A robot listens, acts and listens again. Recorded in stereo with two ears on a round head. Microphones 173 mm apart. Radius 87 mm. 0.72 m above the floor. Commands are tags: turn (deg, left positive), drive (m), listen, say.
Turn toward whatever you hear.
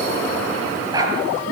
<turn deg="-20"/>
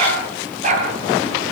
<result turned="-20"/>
<turn deg="-140"/>
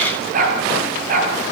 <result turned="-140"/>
<turn deg="-45"/>
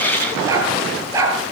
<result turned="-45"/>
<turn deg="-15"/>
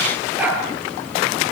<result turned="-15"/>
<say>Found it: a dog barking, straight ahead.</say>